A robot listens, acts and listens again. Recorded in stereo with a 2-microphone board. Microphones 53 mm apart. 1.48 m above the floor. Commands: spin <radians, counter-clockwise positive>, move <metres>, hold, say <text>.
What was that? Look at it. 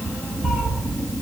spin 0.52
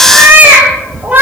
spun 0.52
spin -0.52
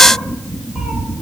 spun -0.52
hold
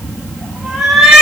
say Found it: a cat meowing, straight ahead.